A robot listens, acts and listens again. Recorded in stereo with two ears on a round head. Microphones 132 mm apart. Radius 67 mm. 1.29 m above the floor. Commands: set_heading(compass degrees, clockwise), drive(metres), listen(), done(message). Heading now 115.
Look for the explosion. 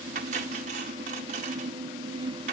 listen()
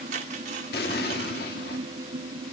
set_heading(50)
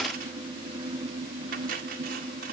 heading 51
listen()
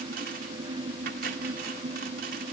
done("I heard an explosion, but can't make it out now. It was about straight ahead or 55° left.")